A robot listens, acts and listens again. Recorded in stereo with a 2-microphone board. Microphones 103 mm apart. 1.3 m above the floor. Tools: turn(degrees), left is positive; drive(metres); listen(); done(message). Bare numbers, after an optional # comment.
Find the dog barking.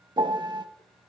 listen()
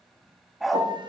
turn(30)
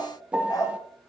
# So it is at 140° left.
turn(140)
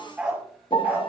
# The dog barking is now 15° right.
turn(-15)
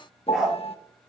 done("Found it: a dog barking, straight ahead, over 4 m away.")